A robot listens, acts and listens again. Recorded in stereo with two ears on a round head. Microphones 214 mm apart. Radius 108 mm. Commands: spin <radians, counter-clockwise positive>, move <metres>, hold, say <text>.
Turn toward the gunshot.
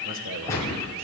spin 0.52
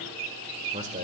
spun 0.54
hold
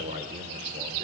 say I heard a gunshot, but can't make it out now. It was about 20° right or 135° left.